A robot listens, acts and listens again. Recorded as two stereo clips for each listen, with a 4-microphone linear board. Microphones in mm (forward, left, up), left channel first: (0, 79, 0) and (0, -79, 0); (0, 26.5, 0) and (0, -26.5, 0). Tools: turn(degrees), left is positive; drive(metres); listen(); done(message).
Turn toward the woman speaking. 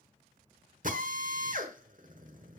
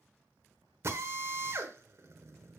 listen()
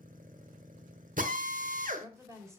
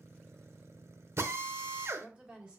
turn(degrees=-20)
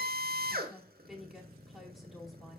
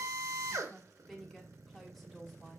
done("Facing the woman speaking.")